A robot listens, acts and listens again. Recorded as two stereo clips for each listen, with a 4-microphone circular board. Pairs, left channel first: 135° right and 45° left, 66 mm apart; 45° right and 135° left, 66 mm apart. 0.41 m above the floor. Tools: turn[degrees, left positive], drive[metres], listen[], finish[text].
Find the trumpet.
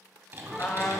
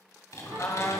Thought: The trumpet: 75° right.
Action: turn[-75]
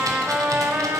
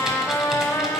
Thought: The trumpet is now 15° right.
Action: turn[-15]
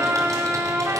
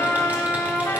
Action: finish[Facing the trumpet.]